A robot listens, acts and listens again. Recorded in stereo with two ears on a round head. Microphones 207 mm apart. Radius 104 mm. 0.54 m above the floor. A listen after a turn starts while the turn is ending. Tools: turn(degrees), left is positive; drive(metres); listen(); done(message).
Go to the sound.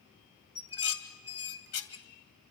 turn(degrees=70)
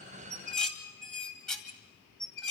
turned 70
drive(metres=1.0)
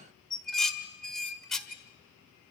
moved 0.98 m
drive(metres=1.0)
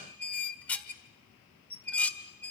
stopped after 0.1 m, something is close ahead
done("Arrived at the dishes clattering, straight ahead.")